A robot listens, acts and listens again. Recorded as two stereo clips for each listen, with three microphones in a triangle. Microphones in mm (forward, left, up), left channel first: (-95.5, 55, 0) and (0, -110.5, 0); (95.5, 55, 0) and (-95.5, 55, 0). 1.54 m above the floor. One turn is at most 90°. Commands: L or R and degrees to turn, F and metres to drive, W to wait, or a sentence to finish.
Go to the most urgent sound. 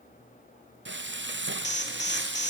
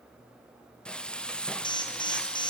L70
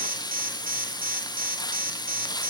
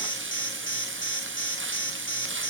R15
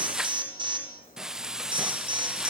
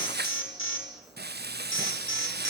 F1.0
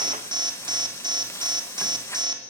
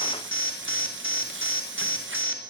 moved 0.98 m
L10
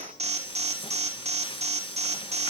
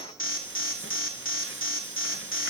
F1.0
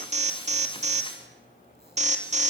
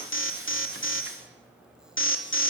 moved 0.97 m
F1.0
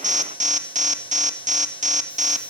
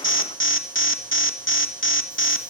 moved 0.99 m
R10
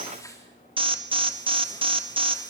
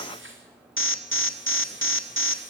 F1.0
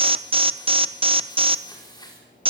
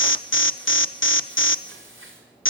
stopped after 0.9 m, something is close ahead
I am next to the alarm.